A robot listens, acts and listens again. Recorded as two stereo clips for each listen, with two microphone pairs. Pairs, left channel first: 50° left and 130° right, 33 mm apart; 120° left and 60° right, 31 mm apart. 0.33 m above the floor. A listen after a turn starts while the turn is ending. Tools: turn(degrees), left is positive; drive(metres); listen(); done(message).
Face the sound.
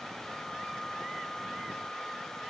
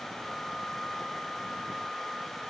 listen()
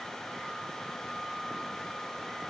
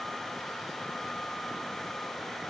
listen()
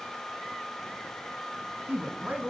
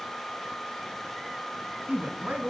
turn(degrees=-85)
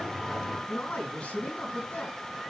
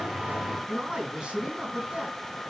done("Facing the man speaking.")